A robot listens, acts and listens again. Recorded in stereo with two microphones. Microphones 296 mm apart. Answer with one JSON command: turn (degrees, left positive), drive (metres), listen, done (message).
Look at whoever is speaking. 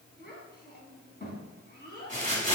{"turn": 35}
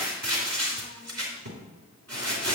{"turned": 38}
{"listen": true}
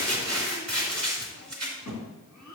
{"turn": 110}
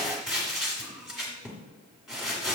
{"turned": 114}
{"listen": true}
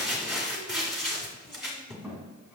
{"done": "Found it: a child speaking, straight ahead."}